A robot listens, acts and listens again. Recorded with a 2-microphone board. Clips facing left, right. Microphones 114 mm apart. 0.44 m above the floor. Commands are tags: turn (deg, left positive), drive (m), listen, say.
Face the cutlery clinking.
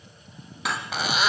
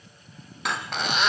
<turn deg="30"/>
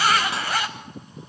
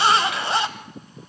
<listen/>
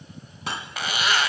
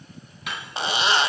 <turn deg="145"/>
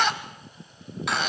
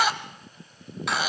<listen/>
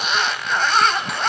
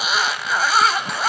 <listen/>
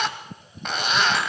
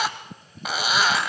<say>Facing where the cutlery clinking came from. I can't hear it now.</say>